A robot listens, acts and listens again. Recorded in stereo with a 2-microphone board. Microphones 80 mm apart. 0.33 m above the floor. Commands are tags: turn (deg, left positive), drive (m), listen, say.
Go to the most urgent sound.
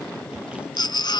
<turn deg="70"/>
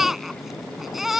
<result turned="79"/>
<drive m="1.0"/>
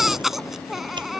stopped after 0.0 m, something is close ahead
<say>Something is in my way. I am facing the baby crying but have not reached it.</say>